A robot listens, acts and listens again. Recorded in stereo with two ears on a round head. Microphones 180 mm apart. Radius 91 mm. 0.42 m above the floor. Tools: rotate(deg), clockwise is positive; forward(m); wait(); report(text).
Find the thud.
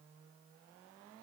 wait()
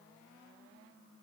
wait()
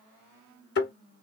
rotate(-60)
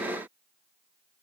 wait()
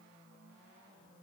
report("I heard a thud, but can't make it out now. It was about straight ahead or 60° left.")